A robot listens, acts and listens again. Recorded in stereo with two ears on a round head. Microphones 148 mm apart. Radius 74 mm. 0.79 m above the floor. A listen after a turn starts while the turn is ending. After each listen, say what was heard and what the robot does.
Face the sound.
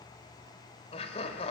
The laughter: about 40° left or 140° left. Turn 40° left.
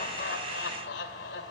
So it is at 100° left. Turn 100° left.
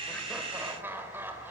The laughter is now 15° right. Turn 15° right.
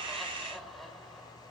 Facing the laughter.